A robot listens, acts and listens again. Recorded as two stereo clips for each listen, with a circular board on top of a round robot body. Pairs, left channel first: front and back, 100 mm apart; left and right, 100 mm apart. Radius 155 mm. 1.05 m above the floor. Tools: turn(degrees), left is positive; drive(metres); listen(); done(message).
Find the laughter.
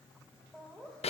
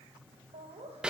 turn(degrees=-85)
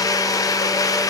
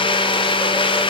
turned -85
listen()
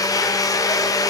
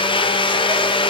listen()
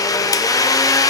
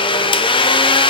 done("I heard laughter from this way, but can't make it out now.")